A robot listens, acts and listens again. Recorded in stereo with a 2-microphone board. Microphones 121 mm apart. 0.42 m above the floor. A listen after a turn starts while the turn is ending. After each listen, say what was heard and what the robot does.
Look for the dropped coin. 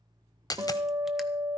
The dropped coin: about 30° left or 150° left. Turn 30° left.
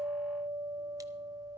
Keep listening.
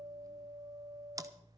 I heard a dropped coin, but can't make it out now. It was about straight ahead or 120° left.